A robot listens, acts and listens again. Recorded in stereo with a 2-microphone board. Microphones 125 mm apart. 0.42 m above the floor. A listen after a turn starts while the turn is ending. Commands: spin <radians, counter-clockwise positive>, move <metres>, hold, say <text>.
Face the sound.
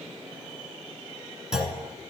spin -0.52
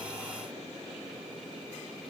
hold
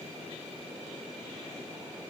say I heard a clunk, but can't make it out now. It was about 25° left or 145° right.